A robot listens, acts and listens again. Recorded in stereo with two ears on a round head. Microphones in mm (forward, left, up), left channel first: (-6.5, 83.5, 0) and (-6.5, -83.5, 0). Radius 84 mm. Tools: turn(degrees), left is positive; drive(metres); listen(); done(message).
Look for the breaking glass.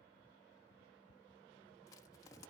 listen()
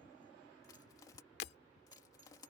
turn(degrees=65)
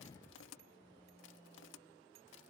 listen()
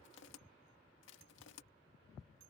done("I heard breaking glass, but can't make it out now. It was about straight ahead or 50° left.")